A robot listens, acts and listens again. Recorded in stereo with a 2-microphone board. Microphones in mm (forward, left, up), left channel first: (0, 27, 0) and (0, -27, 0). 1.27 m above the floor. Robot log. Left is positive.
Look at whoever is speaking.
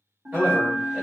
note: The man speaking: about 30° right or 150° right.
cmd yaw -30
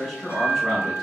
end: Found it: a man speaking, straight ahead.